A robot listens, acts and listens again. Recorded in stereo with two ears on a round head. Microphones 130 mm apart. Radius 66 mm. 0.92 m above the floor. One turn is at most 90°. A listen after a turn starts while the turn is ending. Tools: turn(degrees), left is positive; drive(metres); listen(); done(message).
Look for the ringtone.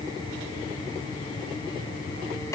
listen()
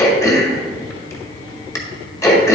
listen()
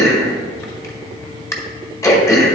done("I can't make out a ringtone to turn to.")